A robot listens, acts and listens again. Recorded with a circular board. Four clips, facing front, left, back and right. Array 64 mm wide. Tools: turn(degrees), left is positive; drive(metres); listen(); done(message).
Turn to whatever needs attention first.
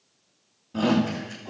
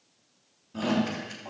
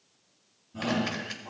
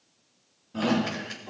turn(degrees=-10)
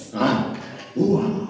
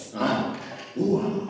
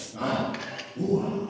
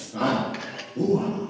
done("Facing the shout, 2 to 4 m away.")